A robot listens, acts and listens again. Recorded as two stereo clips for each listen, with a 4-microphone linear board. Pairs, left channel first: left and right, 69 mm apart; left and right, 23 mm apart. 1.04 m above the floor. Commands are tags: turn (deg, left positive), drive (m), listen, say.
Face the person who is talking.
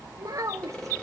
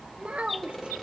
<turn deg="-55"/>
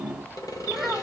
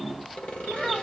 <listen/>
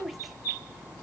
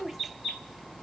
<say>Facing the child speaking, under 1 m away.</say>